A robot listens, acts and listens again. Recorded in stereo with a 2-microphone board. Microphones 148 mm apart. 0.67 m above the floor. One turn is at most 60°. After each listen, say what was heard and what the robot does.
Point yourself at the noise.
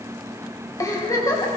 The giggle: about 25° left or 155° left. Turn 25° left.
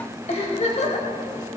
So it is at 130° left. Turn 60° left.
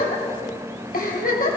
The giggle is now 100° left. Turn 60° left.
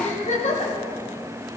The giggle is now 55° left. Turn 55° left.
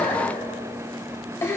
The giggle is now 20° left. Turn 20° left.
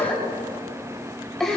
Facing the giggle.